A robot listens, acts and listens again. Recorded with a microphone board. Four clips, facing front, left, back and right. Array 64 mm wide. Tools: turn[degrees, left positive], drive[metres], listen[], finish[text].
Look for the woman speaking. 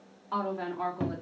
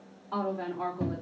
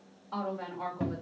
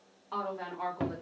Action: finish[Facing the woman speaking.]